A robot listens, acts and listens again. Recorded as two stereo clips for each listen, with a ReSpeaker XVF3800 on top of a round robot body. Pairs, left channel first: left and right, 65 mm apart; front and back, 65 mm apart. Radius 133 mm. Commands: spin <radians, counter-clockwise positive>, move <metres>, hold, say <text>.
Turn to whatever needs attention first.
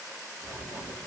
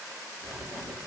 hold
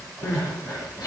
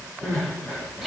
spin 1.66
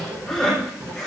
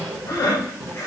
spin 0.17
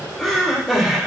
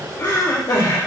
say Found it: crying, straight ahead, 2 to 4 m away.